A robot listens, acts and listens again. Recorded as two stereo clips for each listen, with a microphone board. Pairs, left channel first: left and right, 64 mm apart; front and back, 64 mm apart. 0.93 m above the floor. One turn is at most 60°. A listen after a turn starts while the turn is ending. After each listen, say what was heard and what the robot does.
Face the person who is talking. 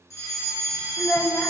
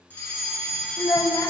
The child speaking: 25° left. Turn 25° left.
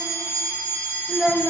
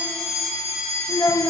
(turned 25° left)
Facing the child speaking.